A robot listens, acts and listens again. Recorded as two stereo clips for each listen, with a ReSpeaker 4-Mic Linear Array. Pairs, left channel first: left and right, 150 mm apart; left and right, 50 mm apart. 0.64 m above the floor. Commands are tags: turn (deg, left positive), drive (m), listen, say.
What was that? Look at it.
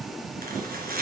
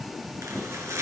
<turn deg="-90"/>
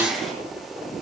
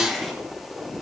<say>Found it: chopping, straight ahead.</say>